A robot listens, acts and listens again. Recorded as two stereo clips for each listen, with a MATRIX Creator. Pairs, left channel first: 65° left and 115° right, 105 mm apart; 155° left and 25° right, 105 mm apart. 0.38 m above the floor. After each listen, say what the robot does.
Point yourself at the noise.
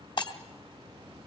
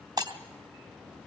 Turn 25° left.
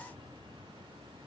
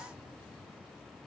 Facing where the breaking glass came from. I can't hear it now.